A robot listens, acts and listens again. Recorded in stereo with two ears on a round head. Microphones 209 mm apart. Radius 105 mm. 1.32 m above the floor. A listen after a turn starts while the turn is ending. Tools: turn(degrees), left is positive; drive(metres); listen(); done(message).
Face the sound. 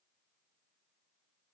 listen()
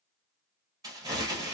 turn(degrees=-15)
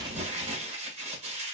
turn(degrees=-150)
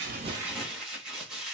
done("Found it: crumpling, straight ahead.")